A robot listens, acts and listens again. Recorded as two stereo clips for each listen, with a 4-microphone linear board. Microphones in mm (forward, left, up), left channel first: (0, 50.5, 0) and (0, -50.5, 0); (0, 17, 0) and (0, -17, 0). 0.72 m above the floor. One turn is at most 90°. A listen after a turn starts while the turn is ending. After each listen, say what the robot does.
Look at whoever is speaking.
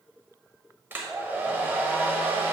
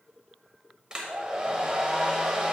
Keep listening.
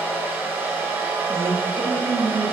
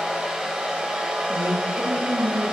Turn 60° right.
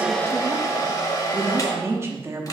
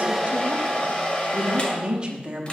Turn 30° right.
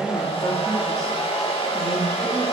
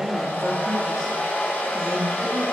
Keep listening.
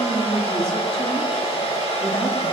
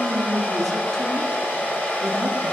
Turn 10° left.
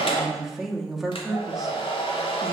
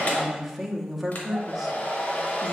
Facing the woman speaking, under 1 m away.